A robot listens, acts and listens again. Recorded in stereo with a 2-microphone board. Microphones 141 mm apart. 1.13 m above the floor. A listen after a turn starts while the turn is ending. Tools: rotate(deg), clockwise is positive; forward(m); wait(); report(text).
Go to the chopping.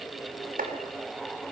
rotate(75)
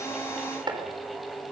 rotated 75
rotate(30)
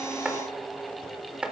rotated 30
forward(1.0)
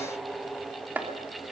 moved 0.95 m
rotate(10)
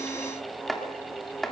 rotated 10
forward(1.0)
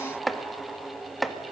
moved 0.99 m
forward(1.0)
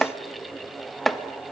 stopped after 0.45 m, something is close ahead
report("Arrived at the chopping, straight ahead.")